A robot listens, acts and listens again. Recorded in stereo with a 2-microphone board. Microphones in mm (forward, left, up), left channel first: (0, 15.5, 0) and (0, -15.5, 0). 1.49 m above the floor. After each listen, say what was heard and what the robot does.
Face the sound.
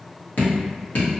The dripping: about 65° left or 115° left. Turn 65° left.
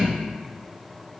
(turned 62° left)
Keep listening.
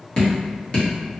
So it is at 35° left. Turn 35° left.
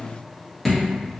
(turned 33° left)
Facing the dripping, 1 to 2 m away.